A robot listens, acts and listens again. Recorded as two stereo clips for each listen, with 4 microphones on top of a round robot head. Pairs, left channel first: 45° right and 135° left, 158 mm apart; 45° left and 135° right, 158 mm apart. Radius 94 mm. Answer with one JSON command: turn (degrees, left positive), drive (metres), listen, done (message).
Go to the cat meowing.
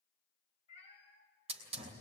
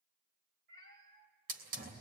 {"turn": -105}
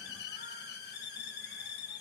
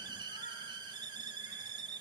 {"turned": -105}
{"listen": true}
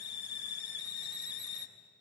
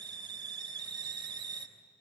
{"listen": true}
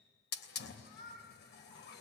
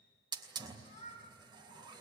{"drive": 1.0}
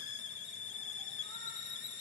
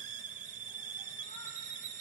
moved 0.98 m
{"listen": true}
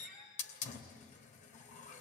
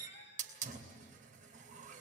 {"listen": true}
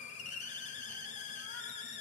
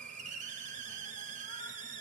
{"done": "I heard a cat meowing from this way, but can't make it out now. I did not reach it."}